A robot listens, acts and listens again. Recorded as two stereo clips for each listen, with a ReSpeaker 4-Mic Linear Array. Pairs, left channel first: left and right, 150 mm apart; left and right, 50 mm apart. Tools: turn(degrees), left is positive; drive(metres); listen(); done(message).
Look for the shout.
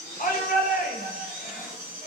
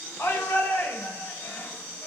turn(degrees=90)
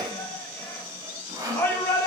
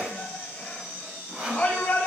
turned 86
turn(degrees=15)
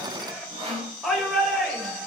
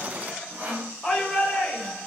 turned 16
done("Facing the shout.")